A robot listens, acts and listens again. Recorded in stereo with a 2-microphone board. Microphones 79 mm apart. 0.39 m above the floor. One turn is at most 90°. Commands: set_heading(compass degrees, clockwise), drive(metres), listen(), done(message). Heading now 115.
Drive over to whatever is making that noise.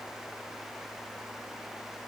listen()
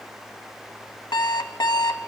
set_heading(25)
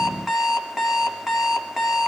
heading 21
drive(1.0)
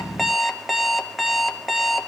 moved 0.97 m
drive(1.0)
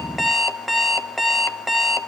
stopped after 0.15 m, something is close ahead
done("I am next to the alarm clock.")